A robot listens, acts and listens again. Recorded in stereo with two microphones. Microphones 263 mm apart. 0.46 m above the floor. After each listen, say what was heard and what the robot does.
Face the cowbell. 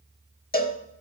The cowbell: about 35° left or 145° left. Turn 35° left.
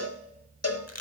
So it is at 110° left. Turn 110° left.
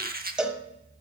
Facing the cowbell, 1 to 2 m away.